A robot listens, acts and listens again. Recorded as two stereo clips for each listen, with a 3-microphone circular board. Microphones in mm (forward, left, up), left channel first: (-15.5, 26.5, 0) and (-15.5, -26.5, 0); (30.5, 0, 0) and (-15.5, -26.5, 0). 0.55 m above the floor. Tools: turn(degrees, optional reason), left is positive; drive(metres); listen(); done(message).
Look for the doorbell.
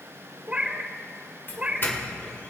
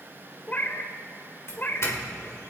turn(degrees=50, reason="The doorbell: 50° left.")
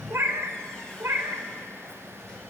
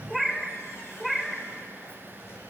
listen()
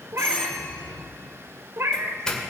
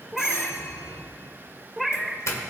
turn(degrees=15, reason="The doorbell is now 15° left.")
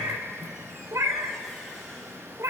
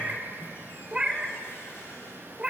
listen()
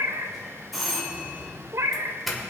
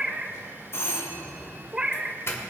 done("Facing the doorbell.")